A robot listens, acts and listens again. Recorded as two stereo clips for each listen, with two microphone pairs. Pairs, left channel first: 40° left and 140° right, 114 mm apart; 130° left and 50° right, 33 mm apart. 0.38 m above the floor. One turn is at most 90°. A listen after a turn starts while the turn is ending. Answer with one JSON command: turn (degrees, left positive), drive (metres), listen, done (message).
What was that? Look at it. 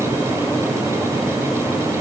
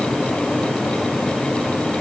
{"listen": true}
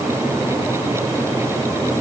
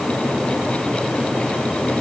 {"listen": true}
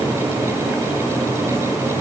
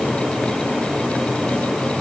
{"done": "I can't make out anything to turn to."}